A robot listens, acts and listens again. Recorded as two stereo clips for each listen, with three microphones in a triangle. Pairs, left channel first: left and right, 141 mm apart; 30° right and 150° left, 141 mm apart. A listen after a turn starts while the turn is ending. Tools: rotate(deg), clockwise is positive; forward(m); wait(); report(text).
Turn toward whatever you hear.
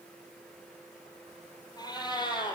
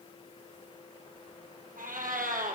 rotate(-145)
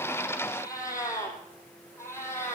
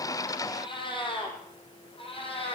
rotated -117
rotate(-20)
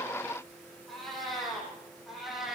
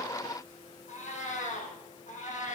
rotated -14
report("Facing the cat meowing, over 4 m away.")